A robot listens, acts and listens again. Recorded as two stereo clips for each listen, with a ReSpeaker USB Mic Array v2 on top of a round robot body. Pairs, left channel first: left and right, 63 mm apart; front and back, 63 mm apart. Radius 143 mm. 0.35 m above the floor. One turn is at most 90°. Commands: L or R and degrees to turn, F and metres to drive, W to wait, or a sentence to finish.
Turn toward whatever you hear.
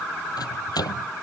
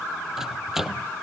L90
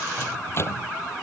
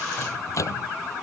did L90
L40
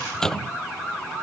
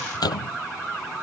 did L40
L10
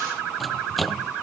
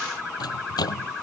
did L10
Facing the microwave.